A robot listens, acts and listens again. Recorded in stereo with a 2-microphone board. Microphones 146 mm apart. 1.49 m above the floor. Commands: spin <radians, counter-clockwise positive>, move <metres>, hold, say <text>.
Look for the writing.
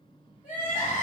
hold
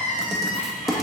spin 0.52
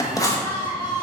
spin 2.62
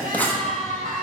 spin 0.17
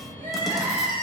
hold
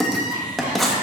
say Found it: writing, straight ahead.